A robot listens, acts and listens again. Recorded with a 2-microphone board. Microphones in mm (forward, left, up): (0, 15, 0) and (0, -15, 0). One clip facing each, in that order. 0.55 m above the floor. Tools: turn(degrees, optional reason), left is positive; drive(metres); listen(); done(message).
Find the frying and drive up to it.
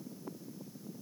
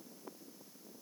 listen()
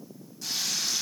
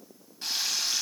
turn(degrees=-45, reason="The frying: about 45° right or 135° right.")
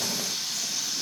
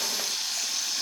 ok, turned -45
turn(degrees=-90, reason="So it is at 90° right.")
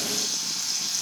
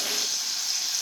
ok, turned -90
turn(degrees=-10, reason="The frying is now 10° right.")
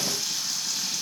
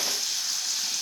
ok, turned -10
drive(metres=1.0)
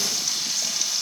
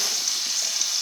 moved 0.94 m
drive(metres=1.0)
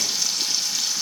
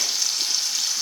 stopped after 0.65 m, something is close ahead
done("I am next to the frying.")